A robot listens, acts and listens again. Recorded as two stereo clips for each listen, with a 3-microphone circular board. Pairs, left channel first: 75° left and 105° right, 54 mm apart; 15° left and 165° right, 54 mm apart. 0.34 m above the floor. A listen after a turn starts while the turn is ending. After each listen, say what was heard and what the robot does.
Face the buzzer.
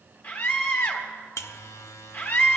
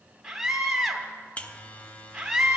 The buzzer: 75° left. Turn 75° left.
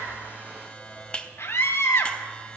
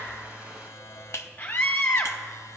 The buzzer is now 10° left. Turn 10° left.
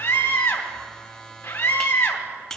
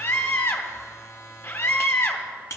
Found it: a buzzer, straight ahead.